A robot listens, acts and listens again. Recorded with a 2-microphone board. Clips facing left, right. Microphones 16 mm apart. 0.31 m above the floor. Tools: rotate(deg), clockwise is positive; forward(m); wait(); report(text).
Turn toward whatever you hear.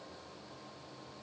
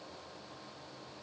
wait()
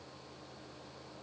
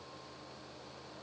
wait()
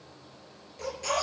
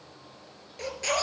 rotate(40)
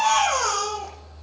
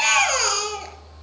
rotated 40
rotate(100)
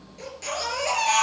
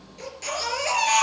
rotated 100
report("Found it: a baby crying, straight ahead.")